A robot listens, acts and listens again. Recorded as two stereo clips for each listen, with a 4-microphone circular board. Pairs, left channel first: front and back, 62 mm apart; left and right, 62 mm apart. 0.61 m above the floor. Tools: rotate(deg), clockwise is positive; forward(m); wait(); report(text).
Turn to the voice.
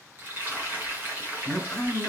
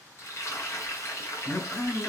rotate(-80)
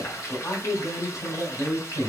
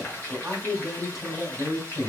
rotate(10)
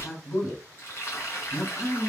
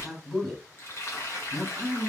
report("Found it: a man speaking, straight ahead, 2 to 4 m away.")